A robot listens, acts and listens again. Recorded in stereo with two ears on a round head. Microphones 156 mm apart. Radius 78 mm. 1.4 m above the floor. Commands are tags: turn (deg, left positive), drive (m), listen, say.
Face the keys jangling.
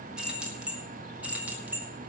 <turn deg="-30"/>
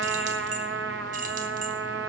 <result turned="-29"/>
<listen/>
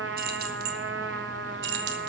<turn deg="-110"/>
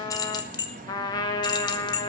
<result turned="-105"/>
<turn deg="25"/>
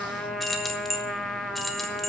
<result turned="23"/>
<say>Facing the keys jangling.</say>